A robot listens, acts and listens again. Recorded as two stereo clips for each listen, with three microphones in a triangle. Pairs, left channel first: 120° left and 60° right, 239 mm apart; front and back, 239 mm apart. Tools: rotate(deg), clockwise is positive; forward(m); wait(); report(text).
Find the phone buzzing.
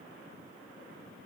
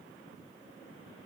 wait()
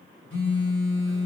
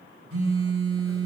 rotate(-155)
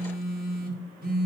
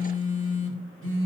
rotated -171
rotate(15)
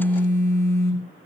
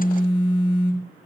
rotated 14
report("Found it: a phone buzzing, straight ahead.")